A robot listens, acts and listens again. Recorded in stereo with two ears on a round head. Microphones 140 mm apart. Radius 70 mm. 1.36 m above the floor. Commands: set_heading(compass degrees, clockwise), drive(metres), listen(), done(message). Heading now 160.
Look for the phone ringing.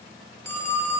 set_heading(145)
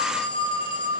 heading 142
set_heading(357)
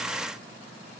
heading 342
set_heading(357)
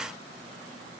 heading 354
listen()
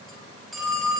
done("Facing the phone ringing.")